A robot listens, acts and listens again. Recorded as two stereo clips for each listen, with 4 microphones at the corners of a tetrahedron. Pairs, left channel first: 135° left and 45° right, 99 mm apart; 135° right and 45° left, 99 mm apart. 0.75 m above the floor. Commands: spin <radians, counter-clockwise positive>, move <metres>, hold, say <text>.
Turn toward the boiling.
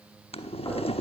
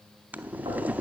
spin 2.09
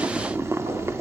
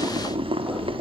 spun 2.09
spin 0.35
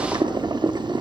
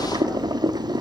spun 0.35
say Found it: boiling, straight ahead.